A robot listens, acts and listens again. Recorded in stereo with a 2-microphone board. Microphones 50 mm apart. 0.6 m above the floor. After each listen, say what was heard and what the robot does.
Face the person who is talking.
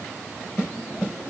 Keep listening.
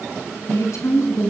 The woman speaking: about 70° left or 110° left. Turn 70° left.
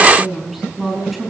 Found it: a woman speaking, straight ahead, over 4 m away.